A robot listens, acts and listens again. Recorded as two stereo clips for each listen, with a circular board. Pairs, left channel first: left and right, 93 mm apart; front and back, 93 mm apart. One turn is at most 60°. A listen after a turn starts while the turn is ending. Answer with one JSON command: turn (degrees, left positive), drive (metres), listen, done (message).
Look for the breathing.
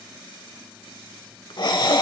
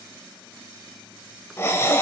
{"turn": 60}
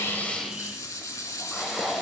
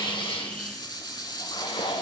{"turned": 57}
{"done": "Facing the breathing, 1 to 2 m away."}